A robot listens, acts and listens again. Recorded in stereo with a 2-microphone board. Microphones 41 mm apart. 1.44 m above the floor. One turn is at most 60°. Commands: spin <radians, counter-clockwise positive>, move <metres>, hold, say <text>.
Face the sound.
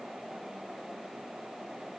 hold
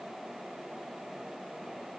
hold
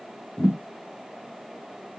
spin 1.05
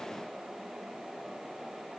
hold
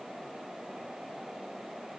say I heard a thud, but can't make it out now. It was about 5° left or 55° left.